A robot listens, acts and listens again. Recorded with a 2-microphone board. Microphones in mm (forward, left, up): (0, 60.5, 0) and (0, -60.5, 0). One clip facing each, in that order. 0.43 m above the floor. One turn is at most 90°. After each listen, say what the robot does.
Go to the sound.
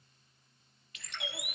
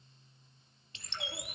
Turn 25° right.
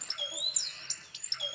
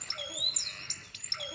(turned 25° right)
Turn 90° right.
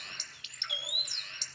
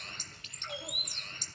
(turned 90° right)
Turn 40° right.
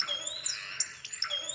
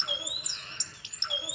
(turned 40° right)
Turn 20° right.
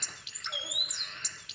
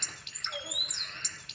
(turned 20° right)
Drive 1.0 m forward.
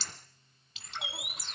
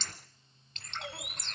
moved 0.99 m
Drive 1.0 m forward.
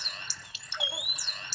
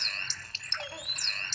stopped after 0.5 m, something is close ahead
Turn 10° left.
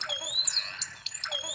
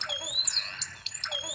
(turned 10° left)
I am next to the bird.